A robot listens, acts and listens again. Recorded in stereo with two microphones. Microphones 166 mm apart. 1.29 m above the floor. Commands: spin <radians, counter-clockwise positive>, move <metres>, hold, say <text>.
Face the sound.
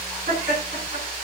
spin -1.05
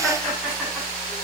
hold
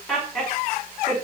say Facing the laughter, over 4 m away.